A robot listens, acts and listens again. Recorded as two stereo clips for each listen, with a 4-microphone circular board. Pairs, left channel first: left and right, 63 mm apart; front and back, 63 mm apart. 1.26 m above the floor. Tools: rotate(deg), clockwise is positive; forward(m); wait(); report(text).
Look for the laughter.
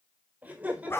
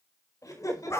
rotate(20)
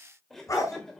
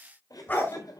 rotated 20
rotate(-10)
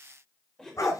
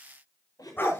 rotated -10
rotate(-10)
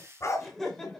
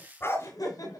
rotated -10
report("Facing the laughter, over 4 m away.")